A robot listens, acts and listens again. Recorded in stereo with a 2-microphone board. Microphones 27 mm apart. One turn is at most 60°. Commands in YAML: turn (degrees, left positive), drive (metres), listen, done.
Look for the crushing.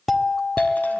listen: true
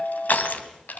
turn: 60
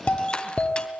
turn: 35
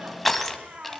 done: "Found it: crushing, straight ahead, 2 to 4 m away."